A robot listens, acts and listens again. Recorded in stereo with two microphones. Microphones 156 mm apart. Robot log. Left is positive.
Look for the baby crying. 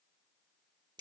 cmd idle
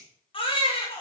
note: The baby crying: about 35° left or 145° left.
cmd yaw +35
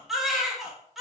end: Found it: a baby crying, straight ahead.